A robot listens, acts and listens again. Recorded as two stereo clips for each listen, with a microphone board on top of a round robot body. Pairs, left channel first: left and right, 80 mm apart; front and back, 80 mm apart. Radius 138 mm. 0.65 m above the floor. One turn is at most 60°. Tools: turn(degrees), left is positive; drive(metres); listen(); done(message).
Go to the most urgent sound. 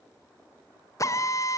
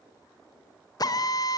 listen()
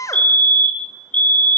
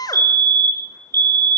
turn(degrees=60)
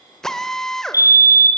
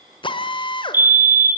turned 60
turn(degrees=60)
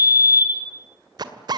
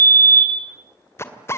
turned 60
turn(degrees=60)
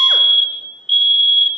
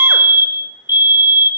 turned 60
drive(metres=1.0)
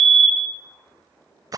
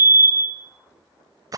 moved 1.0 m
drive(metres=1.0)
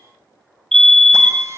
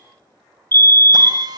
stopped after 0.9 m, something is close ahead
turn(degrees=10)
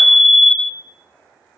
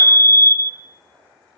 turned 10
done("I am next to the fire alarm.")